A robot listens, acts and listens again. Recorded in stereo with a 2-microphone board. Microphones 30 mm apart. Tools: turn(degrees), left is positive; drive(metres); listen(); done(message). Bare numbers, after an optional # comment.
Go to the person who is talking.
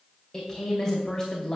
# The woman speaking: about 15° left or 165° left.
turn(15)
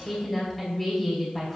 drive(1.0)
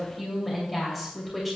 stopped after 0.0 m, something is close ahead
done("Blocked. The woman speaking is further on, straight ahead.")